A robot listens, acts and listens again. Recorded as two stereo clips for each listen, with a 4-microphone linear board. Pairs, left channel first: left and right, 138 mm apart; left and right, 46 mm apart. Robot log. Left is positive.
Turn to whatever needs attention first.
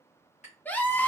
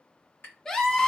cmd yaw +30
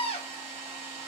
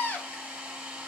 note: So it is at 135° left.
cmd yaw +135
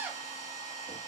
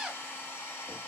note: The scream is now 15° right.
cmd yaw -15
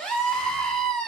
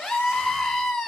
end: Found it: a scream, straight ahead.